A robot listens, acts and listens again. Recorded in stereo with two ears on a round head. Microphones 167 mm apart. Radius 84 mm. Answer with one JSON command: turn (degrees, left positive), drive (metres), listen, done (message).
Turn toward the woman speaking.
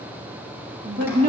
{"turn": -45}
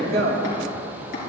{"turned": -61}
{"turn": -60}
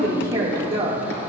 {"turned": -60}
{"turn": -25}
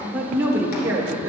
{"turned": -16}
{"turn": -15}
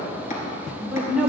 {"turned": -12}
{"turn": -10}
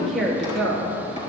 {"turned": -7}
{"done": "Found it: a woman speaking, straight ahead, 2 to 4 m away."}